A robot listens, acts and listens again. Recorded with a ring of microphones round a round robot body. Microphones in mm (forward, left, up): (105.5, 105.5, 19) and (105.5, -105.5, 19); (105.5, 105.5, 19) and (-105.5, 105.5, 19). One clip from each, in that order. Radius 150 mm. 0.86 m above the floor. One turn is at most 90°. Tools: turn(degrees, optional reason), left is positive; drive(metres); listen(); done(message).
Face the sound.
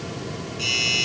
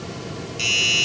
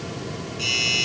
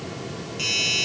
turn(degrees=-90, reason="The doorbell: 115° right.")
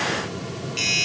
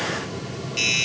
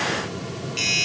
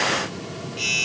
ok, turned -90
turn(degrees=-20, reason="The doorbell is now 20° right.")
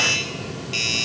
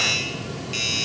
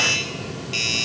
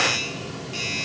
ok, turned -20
done("Facing the doorbell.")